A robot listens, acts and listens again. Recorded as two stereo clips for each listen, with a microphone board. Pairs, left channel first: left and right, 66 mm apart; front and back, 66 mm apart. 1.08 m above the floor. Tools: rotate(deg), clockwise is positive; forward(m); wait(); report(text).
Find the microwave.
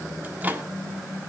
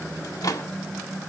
rotate(25)
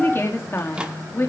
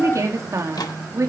rotate(15)
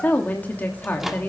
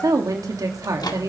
report("Facing the microwave.")